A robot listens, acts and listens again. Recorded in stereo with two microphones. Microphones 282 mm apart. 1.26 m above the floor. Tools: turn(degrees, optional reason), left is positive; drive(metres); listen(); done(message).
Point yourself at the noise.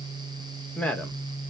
turn(degrees=30)
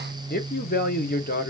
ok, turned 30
turn(degrees=145, reason="So it is at 145° left.")
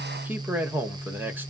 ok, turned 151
done("Found it: a man speaking, straight ahead.")